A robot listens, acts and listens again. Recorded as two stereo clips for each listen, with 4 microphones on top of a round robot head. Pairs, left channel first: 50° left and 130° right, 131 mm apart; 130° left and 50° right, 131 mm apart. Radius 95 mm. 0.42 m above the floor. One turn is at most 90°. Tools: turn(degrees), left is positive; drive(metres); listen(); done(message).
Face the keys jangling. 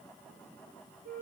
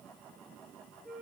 listen()
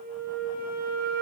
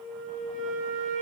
listen()
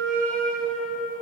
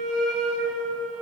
done("I can't make out keys jangling to turn to.")